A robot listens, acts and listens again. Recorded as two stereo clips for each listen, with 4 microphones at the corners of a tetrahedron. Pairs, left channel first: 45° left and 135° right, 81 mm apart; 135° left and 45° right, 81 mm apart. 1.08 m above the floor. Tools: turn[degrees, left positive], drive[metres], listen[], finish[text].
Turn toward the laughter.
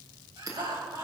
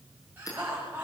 Thought: The laughter: 115° right.
Action: turn[-115]
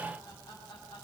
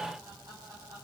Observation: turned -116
Action: finish[Facing the laughter.]